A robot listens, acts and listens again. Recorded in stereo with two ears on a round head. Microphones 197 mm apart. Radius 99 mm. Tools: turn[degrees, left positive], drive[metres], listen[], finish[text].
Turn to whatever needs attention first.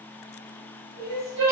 Thought: The crying: about 50° right or 130° right.
Action: turn[-50]
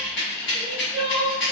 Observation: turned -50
Thought: So it is at 10° right.
Action: turn[-10]
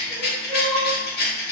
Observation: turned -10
Action: finish[Facing the crying.]